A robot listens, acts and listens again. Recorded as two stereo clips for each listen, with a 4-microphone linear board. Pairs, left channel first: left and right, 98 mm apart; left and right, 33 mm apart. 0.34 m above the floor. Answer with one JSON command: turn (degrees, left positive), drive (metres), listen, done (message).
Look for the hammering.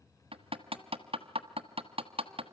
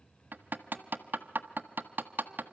{"turn": -70}
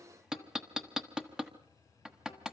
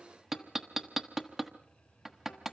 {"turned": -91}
{"done": "Found it: hammering, straight ahead, 1 to 2 m away."}